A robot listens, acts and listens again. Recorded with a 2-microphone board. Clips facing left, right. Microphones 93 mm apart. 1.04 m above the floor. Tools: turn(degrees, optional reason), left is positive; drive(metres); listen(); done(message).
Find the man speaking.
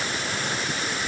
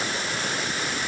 listen()
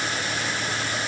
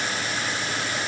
listen()
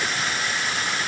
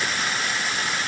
done("I can't make out a man speaking to turn to.")